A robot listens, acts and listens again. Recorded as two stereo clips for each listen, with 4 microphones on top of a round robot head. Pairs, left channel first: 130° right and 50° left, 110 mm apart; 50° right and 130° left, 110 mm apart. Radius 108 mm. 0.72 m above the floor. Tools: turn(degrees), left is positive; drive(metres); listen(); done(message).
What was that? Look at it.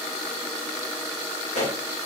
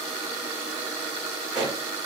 turn(degrees=-145)
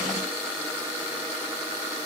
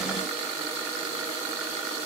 done("I heard a pop from this way, but can't make it out now.")